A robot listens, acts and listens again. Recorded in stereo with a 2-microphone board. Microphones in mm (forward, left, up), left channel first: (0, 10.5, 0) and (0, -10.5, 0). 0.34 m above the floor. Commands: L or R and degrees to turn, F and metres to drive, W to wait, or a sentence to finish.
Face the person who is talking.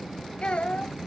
L50
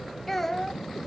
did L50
L10
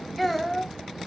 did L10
Facing the child speaking, under 1 m away.